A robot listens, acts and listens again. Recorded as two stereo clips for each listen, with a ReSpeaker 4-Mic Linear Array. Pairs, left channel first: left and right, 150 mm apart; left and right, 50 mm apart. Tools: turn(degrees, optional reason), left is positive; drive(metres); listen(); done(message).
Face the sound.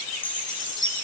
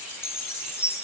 turn(degrees=60, reason="The chime: about 60° left or 120° left.")
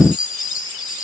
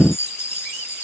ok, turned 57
turn(degrees=60, reason="So it is at 60° left.")
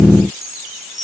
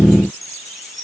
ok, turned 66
done("Found it: a chime, straight ahead.")